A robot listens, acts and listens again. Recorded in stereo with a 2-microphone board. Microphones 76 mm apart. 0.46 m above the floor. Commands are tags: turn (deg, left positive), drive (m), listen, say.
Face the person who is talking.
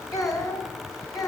<turn deg="55"/>
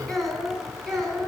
<say>Found it: a child speaking, straight ahead.</say>